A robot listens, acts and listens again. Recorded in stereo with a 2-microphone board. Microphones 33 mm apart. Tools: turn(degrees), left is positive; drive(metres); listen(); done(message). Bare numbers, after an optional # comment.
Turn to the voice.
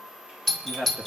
# The man speaking: about 60° right or 120° right.
turn(-60)
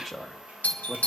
done("Facing the man speaking, 1 to 2 m away.")